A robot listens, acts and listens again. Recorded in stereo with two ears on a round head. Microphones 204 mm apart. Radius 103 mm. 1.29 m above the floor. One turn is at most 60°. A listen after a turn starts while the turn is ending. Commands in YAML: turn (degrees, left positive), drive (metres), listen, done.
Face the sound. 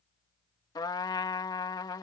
turn: 20
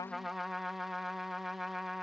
done: "Facing the trumpet."